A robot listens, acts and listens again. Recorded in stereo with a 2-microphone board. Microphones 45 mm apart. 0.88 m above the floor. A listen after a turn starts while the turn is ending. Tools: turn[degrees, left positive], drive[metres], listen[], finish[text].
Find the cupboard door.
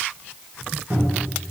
Thought: The cupboard door: about 55° right or 125° right.
Action: turn[-55]
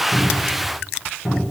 Action: finish[Found it: a cupboard door, straight ahead.]